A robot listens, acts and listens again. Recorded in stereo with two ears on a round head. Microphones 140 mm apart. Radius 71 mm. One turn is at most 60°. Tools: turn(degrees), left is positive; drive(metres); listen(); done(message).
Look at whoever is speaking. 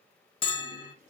listen()
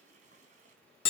listen()
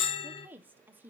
turn(degrees=-30)
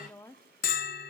turn(degrees=15)
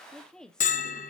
done("Found it: a woman speaking, straight ahead, under 1 m away.")